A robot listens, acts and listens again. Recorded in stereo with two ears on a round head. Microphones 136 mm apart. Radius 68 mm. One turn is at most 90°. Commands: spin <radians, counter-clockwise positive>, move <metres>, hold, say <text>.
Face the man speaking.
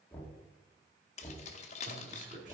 spin -1.05
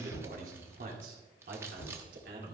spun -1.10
spin -1.22
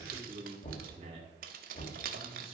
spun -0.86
spin -0.70
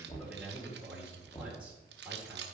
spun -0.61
say Facing the man speaking, 2 to 4 m away.